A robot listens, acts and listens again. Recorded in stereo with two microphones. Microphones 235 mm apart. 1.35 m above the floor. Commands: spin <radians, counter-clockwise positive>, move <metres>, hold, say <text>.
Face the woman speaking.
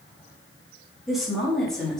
spin 0.52
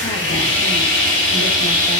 hold
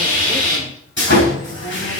hold
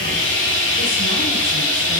say I heard a woman speaking, but can't make it out now. It was about 25° right or 145° left.